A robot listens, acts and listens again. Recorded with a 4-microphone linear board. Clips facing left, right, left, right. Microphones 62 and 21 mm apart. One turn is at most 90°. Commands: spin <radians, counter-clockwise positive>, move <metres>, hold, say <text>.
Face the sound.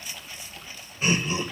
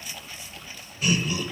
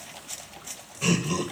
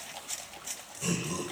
spin 0.44
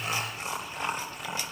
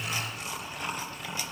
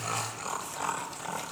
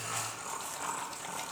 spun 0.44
spin 0.44
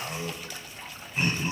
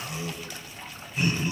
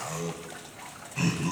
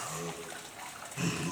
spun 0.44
spin 0.61
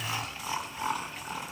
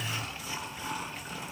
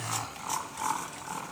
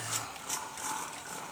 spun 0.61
spin 1.57
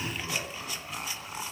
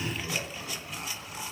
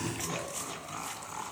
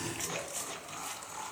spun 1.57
spin 0.44
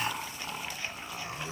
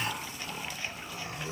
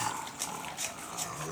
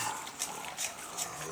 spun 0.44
spin 0.44
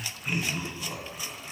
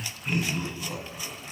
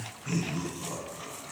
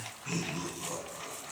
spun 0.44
say Facing the laughter, 2 to 4 m away.